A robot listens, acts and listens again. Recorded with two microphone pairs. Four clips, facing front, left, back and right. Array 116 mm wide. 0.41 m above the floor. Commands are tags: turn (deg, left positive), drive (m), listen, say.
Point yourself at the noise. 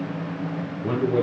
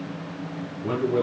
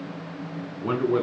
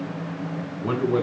<turn deg="-145"/>
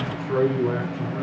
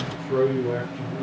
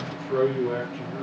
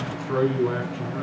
<turn deg="-60"/>
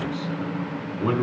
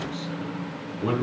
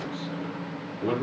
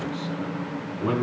<say>Facing the man speaking, over 4 m away.</say>